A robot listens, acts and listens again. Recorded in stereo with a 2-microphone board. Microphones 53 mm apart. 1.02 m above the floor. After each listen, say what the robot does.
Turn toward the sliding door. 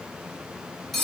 Keep listening.
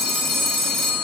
Keep listening.
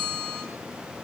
I can't make out a sliding door to turn to.